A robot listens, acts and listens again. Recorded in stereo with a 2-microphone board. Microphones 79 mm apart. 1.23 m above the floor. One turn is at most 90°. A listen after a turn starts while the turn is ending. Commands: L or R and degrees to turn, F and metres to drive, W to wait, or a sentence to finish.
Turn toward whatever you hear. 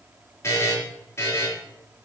L35
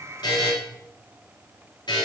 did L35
L90
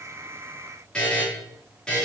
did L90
L10
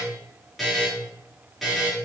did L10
Facing the buzzer.